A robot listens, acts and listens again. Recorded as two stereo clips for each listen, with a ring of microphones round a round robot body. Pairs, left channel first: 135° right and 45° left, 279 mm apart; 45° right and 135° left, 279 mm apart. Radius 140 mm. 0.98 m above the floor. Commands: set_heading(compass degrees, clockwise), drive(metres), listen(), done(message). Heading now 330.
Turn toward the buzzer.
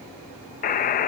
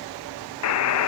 set_heading(45)
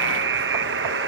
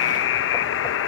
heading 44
done("Found it: a buzzer, straight ahead.")